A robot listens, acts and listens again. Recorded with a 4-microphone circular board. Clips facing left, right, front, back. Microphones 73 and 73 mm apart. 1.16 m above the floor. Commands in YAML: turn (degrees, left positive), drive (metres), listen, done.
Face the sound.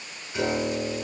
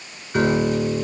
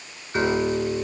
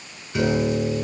turn: -50
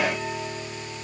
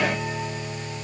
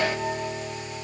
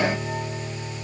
done: "Found it: a piano, straight ahead, over 4 m away."